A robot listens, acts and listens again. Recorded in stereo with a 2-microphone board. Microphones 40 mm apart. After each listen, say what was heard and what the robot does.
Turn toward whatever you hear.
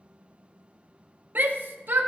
The shout: about 55° right or 125° right. Turn 55° right.
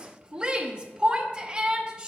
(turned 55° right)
So it is at 25° right. Turn 25° right.
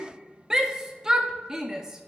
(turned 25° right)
The shout is now 15° right. Turn 15° right.
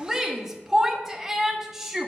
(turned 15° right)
The shout is now 10° right. Turn 10° right.
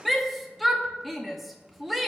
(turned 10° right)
Found it: a shout, straight ahead.